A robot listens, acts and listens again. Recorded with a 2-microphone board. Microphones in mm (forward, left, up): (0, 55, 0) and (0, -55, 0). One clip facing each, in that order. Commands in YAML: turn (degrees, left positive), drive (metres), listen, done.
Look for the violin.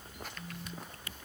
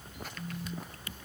listen: true
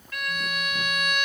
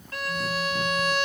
turn: -35
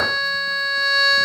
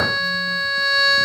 done: "Facing the violin."